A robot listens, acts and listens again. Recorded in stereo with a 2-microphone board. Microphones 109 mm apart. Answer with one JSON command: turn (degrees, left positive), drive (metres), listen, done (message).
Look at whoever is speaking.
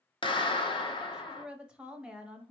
{"turn": -30}
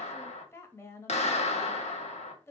{"turn": 25}
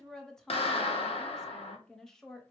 {"done": "Facing the woman speaking, under 1 m away."}